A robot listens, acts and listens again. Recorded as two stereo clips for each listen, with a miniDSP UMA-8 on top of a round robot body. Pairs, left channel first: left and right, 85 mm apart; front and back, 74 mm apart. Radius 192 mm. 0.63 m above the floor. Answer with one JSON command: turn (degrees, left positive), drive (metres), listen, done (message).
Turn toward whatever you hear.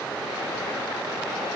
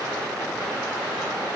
{"listen": true}
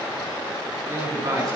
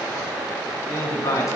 {"turn": -45}
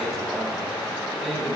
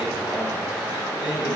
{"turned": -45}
{"done": "Facing the man speaking, over 4 m away."}